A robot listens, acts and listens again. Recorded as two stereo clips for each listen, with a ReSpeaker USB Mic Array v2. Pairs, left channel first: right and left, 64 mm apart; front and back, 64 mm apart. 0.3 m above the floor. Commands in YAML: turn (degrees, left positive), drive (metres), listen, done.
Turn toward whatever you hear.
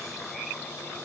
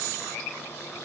listen: true
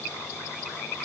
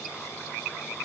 listen: true
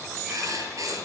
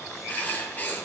turn: 60
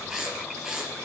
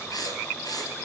done: "Found it: writing, straight ahead, 2 to 4 m away."